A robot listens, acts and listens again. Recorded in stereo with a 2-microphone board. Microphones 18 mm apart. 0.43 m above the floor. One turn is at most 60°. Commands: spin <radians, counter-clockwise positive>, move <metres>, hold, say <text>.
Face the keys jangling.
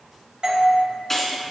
spin 0.35
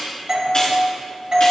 hold
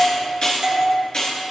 spin 1.05
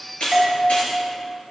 spin 1.05
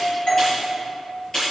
spin 0.44
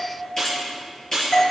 spin 0.35
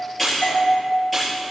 say Found it: keys jangling, straight ahead, over 4 m away.